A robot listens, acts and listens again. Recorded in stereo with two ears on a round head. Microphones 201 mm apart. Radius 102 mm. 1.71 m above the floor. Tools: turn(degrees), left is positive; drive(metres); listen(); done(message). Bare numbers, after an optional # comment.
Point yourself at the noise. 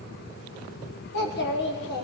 # The child speaking: about 50° left or 130° left.
turn(50)
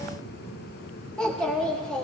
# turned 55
done("Found it: a child speaking, straight ahead.")